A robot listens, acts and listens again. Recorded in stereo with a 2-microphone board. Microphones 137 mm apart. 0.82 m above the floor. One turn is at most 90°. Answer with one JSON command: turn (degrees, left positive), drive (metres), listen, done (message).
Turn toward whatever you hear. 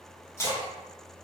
{"turn": 20}
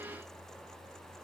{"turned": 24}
{"listen": true}
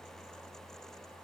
{"done": "I heard a splash, but can't make it out now. It was about straight ahead or 135° left."}